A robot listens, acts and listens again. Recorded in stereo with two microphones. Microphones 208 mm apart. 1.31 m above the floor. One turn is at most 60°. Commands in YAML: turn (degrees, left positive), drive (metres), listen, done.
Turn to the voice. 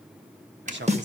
turn: -60
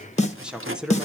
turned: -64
done: "Facing the man speaking."